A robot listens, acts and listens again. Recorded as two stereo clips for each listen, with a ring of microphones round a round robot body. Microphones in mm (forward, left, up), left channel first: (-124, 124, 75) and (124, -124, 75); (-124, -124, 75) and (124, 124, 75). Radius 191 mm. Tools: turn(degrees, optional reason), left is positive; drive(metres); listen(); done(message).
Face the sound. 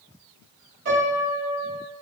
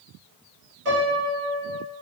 done("Found it: a piano, straight ahead, 1 to 2 m away.")